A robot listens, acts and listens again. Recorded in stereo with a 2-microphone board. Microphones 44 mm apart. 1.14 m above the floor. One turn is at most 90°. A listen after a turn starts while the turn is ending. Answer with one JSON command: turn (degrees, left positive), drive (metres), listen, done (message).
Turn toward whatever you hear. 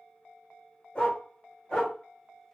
{"turn": 20}
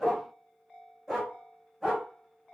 {"turn": -10}
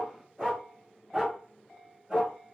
{"turn": -10}
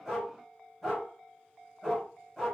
{"done": "Found it: a dog barking, straight ahead."}